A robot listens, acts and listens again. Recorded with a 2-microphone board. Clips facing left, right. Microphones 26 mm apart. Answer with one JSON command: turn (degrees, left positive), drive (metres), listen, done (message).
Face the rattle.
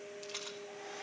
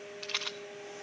{"turn": -50}
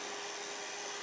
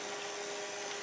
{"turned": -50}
{"listen": true}
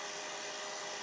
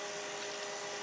{"listen": true}
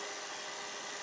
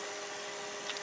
{"done": "I heard a rattle, but can't make it out now. It was about straight ahead or 80° right."}